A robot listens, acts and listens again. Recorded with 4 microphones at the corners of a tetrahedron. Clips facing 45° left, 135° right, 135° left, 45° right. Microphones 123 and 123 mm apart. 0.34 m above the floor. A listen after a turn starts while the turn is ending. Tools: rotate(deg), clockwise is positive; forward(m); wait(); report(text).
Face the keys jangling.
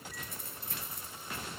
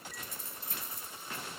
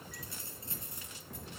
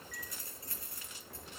rotate(-65)
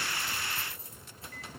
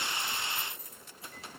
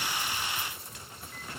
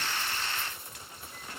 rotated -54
rotate(15)
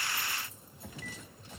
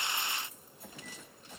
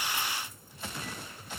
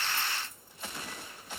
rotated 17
wait()
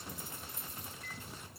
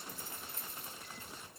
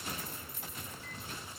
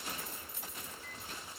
rotate(30)
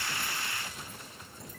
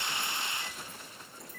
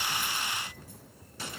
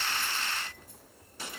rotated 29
wait()
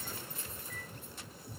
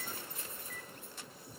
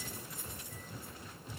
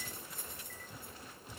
rotate(10)
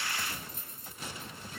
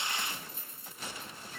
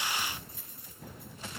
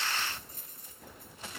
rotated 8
report("Facing the keys jangling.")